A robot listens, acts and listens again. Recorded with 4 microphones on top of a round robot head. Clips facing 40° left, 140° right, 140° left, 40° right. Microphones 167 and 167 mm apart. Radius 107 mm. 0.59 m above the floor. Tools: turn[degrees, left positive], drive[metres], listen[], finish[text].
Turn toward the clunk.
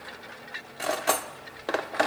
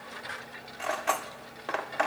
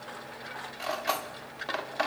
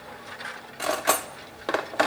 Action: listen[]
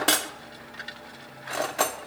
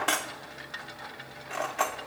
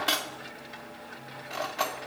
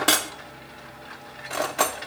Action: listen[]
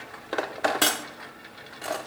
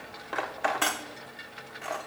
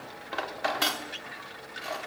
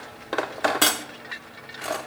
Action: finish[I can't make out a clunk, only cutlery clinking.]